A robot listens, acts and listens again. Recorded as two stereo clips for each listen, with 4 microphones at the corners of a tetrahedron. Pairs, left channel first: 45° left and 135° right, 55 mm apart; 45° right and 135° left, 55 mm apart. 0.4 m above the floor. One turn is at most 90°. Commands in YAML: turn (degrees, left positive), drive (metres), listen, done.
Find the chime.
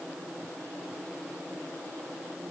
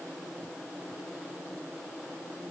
listen: true
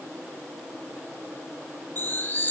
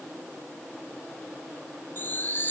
done: "Found it: a chime, straight ahead, under 1 m away."